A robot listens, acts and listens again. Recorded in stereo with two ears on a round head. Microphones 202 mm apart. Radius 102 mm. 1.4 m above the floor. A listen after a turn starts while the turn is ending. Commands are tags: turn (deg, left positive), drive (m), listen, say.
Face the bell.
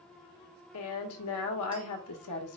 <listen/>
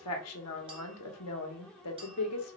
<listen/>
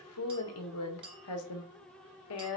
<say>I can't make out a bell, only a woman speaking and a clink.</say>